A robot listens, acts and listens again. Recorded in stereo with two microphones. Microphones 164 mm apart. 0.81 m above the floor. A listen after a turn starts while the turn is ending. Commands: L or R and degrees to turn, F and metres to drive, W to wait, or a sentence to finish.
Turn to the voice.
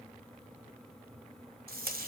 W
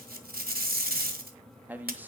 R30
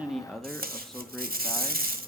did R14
Found it: a man speaking, straight ahead.